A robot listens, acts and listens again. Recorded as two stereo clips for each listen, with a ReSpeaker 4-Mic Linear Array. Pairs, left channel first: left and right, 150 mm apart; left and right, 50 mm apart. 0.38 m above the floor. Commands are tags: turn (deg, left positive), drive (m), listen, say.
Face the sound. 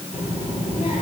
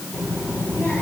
<turn deg="40"/>
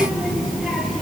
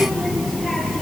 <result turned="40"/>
<say>Found it: a child speaking, straight ahead, over 4 m away.</say>